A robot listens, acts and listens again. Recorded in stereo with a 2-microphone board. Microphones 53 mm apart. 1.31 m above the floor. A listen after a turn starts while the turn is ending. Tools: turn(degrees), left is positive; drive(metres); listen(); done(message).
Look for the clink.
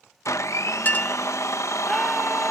turn(degrees=35)
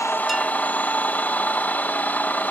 listen()
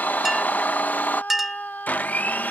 done("Facing the clink.")